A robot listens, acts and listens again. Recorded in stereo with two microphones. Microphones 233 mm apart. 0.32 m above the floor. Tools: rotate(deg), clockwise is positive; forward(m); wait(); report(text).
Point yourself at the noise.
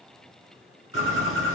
rotate(-65)
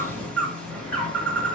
report("Facing the bird, 2 to 4 m away.")